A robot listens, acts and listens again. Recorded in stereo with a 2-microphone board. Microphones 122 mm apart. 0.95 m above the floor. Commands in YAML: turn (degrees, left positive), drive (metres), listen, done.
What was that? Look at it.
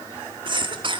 turn: -40
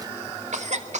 turn: -95
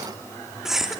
done: "Facing the cough, 2 to 4 m away."